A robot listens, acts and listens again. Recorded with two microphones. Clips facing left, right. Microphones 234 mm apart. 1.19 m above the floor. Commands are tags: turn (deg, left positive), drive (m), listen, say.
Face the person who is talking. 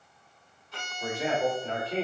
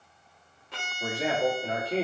<turn deg="-30"/>
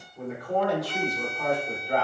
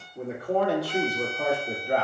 <turn deg="-125"/>
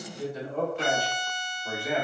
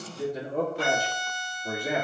<turn deg="-35"/>
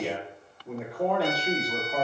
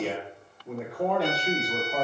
<say>Facing the man speaking.</say>